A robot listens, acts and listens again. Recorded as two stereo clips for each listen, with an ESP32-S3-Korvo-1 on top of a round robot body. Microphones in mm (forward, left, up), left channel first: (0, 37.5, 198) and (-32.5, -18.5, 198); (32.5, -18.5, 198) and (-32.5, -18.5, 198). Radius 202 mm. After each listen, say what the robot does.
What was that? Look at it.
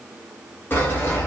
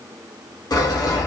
Found it: sawing, straight ahead, 1 to 2 m away.